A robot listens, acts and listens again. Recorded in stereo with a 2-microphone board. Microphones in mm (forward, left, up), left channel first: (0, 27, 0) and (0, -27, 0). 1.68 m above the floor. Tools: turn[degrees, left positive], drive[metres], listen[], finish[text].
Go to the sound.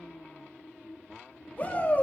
Thought: The shout: about 35° left or 145° left.
Action: turn[35]
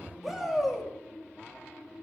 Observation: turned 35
Action: drive[1.0]
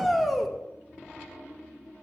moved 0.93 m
Action: drive[1.0]
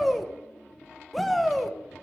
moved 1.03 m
Action: drive[1.0]
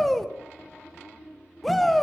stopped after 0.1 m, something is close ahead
Action: finish[Arrived at the shout, straight ahead.]